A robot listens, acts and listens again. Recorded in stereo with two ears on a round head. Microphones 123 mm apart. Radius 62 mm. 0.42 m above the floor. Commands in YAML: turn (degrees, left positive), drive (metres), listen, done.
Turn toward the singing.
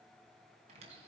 listen: true
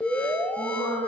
turn: 25
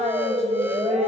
turn: 130
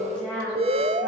done: "Found it: singing, straight ahead."